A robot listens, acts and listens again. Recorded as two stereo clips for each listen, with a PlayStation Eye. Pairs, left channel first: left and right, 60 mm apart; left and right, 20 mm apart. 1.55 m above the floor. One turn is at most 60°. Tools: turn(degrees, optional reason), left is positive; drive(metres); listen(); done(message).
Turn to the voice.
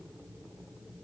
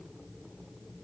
listen()
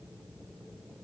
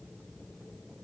listen()
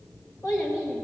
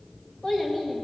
turn(degrees=60, reason="The child speaking: about 60° left or 120° left.")
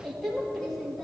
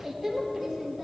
done("Found it: a child speaking, straight ahead, 1 to 2 m away.")